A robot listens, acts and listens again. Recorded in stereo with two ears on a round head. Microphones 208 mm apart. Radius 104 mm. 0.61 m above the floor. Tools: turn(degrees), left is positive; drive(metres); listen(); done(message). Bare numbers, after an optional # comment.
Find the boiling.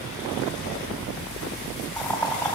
turn(30)
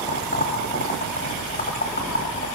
# So it is at 140° left.
turn(140)
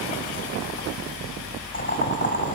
# The boiling is now 35° left.
turn(35)
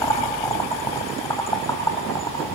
# The boiling is now 15° left.
turn(15)
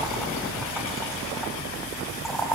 done("Found it: boiling, straight ahead.")